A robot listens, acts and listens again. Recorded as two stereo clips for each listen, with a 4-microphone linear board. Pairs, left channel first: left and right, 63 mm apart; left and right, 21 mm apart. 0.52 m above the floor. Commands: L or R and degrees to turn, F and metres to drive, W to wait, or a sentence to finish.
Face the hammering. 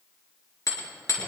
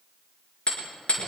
L60
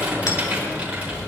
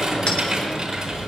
W
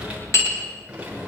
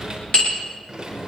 L55
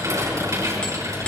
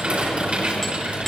W
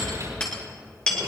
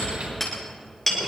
L15
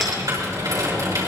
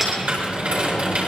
W
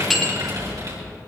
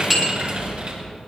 Found it: hammering, straight ahead.